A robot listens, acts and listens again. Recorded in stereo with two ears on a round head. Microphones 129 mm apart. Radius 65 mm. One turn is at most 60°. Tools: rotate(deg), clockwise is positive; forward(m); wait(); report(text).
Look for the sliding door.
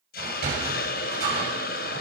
rotate(60)
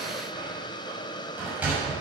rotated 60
rotate(10)
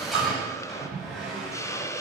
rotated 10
report("Facing the sliding door.")